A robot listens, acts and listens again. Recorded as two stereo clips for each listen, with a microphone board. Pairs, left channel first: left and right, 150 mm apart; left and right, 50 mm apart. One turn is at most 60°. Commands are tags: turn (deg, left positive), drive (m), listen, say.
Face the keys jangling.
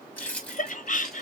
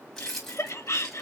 <turn deg="30"/>
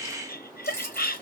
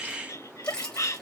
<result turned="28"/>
<turn deg="15"/>
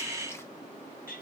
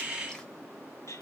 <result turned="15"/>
<listen/>
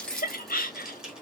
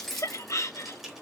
<turn deg="-30"/>
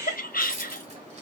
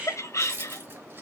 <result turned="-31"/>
<turn deg="-60"/>
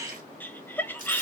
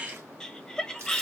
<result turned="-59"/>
<turn deg="-60"/>
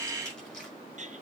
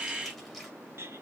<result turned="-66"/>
<turn deg="-10"/>
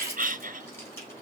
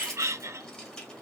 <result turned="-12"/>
<turn deg="15"/>
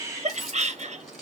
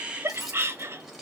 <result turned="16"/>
<say>Facing the keys jangling, 1 to 2 m away.</say>